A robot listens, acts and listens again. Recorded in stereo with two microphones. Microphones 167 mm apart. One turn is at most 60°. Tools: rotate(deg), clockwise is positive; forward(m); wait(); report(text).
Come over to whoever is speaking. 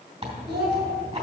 rotate(60)
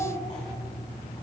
rotate(30)
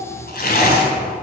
wait()
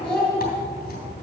forward(1.0)
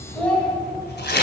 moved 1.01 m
forward(1.0)
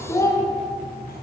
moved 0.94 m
rotate(-20)
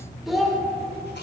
forward(1.0)
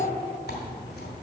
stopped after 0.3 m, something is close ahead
wait()
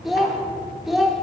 report("Arrived at the child speaking, straight ahead.")